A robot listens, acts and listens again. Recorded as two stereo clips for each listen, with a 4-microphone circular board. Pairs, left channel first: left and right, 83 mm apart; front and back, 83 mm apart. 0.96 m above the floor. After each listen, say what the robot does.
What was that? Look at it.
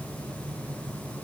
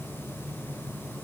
Keep listening.
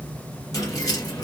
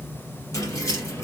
Turn 50° left.
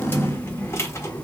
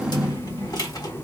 Turn 40° left.
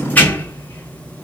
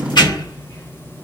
Turn 30° left.
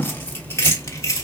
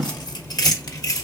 Turn 40° left.
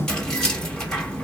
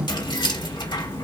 Turn 10° left.
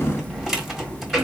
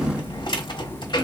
Facing the keys jangling.